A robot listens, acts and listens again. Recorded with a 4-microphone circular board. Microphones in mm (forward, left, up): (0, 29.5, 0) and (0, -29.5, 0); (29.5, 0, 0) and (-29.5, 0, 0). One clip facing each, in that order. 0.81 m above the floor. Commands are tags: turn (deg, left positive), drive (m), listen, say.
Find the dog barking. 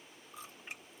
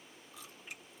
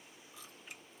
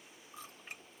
<listen/>
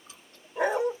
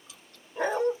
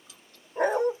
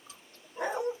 <turn deg="10"/>
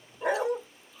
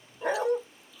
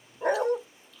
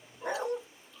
<say>Found it: a dog barking, straight ahead, under 1 m away.</say>